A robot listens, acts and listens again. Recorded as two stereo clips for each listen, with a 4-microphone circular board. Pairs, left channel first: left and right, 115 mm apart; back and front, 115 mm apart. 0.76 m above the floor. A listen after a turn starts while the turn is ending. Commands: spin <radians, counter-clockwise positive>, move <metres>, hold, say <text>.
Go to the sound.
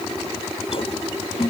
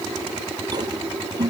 spin 0.96
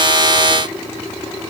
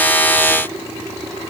hold
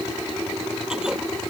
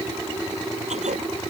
move 1.0
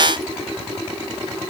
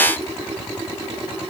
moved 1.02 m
hold
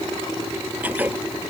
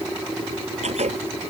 spin -0.26
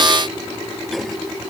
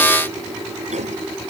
hold
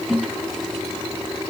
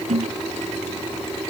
move 1.0
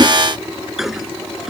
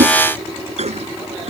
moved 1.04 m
move 1.0
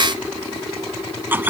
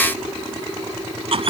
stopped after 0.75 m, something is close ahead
spin -0.35
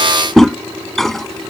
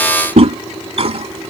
say I am next to the toilet flushing.